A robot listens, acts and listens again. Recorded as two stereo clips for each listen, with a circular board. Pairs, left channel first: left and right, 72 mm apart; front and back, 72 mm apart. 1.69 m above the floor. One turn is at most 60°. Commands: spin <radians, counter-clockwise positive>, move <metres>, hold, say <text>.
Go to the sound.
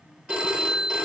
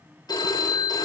spin -0.35
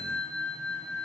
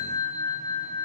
move 1.0
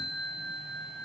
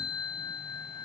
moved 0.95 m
move 1.0
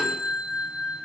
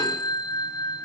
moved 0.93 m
spin -0.17
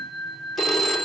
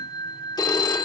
move 1.0
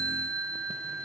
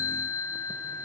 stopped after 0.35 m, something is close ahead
say Arrived at the phone ringing, straight ahead.